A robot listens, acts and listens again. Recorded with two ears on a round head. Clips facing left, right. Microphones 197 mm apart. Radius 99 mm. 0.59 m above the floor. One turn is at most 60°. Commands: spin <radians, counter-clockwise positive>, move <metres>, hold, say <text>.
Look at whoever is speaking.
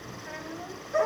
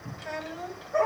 spin -0.96
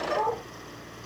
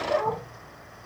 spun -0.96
hold
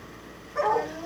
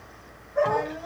hold
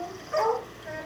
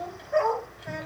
say Found it: a child speaking, straight ahead, 1 to 2 m away.